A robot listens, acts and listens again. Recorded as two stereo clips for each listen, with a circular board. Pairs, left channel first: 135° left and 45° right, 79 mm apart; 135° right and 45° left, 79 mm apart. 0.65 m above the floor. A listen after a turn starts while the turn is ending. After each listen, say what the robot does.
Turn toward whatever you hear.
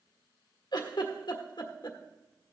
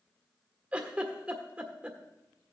Turn 120° left.
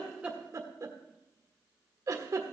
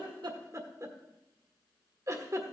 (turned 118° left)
Found it: a giggle, straight ahead, 1 to 2 m away.